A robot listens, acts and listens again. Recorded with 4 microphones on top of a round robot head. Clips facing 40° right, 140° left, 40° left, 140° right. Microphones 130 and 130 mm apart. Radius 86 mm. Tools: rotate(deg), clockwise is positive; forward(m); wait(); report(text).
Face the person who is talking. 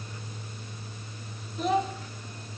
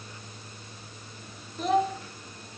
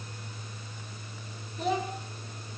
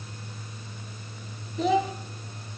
rotate(130)
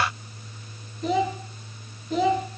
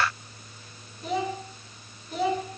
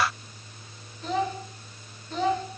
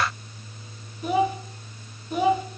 rotate(60)
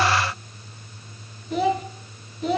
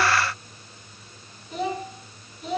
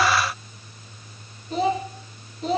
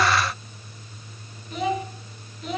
rotate(15)
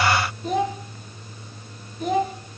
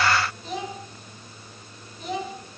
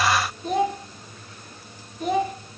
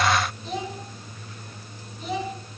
report("Facing the child speaking.")